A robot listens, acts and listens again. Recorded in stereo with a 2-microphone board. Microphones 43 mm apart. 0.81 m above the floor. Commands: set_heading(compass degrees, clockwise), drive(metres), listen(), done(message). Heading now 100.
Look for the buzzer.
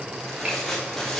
listen()
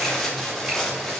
listen()
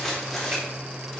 done("I can't make out a buzzer, only tearing paper.")